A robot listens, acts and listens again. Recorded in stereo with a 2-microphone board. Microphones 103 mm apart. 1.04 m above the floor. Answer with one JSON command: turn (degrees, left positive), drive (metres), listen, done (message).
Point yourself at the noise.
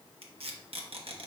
{"turn": -70}
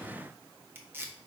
{"turn": -25}
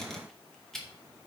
{"done": "Found it: tape being pulled, straight ahead."}